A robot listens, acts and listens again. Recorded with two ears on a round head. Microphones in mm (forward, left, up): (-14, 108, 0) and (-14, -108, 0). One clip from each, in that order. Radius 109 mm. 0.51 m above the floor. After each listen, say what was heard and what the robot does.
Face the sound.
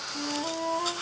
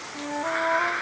The flute: about 60° right or 120° right. Turn 60° right.
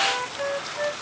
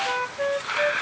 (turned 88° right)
So it is at 25° right. Turn 25° right.
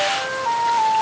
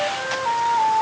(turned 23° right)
Facing the flute.